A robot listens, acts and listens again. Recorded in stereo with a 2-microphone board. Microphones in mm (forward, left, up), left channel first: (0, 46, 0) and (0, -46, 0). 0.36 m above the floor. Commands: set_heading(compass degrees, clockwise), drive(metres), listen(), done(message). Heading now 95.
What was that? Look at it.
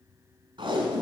set_heading(155)
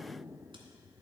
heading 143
listen()
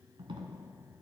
set_heading(213)
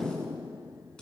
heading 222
set_heading(212)
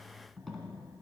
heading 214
done("Facing the tape being pulled, 1 to 2 m away.")